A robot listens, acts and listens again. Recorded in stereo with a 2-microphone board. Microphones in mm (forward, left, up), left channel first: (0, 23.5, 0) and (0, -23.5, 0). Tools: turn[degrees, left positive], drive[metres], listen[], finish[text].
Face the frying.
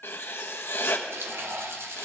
Thought: The frying: about 70° right or 110° right.
Action: turn[-70]
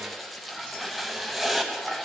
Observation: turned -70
Action: finish[Facing the frying.]